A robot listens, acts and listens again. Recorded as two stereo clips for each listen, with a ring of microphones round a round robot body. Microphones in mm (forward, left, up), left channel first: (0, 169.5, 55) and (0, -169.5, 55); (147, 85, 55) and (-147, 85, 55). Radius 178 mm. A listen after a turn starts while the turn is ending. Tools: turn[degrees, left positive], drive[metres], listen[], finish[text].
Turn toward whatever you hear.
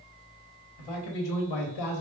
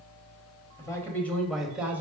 Thought: The man speaking: 95° left.
Action: turn[95]
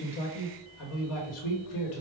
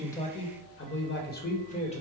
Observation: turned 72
Thought: The man speaking is now 70° left.
Action: turn[70]
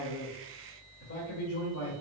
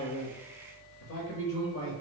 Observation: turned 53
Thought: The man speaking is now 45° left.
Action: turn[45]
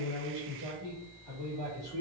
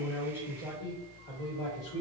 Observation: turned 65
Thought: The man speaking is now 10° right.
Action: turn[-10]
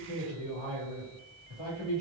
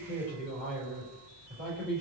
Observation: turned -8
Action: finish[Found it: a man speaking, straight ahead, 1 to 2 m away.]